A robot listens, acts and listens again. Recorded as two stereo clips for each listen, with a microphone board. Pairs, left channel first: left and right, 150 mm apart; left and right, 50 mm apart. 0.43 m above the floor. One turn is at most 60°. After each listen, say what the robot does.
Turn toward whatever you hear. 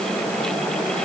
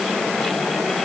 Keep listening.
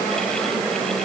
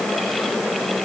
Keep listening.
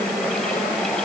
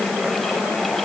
I can't make out anything.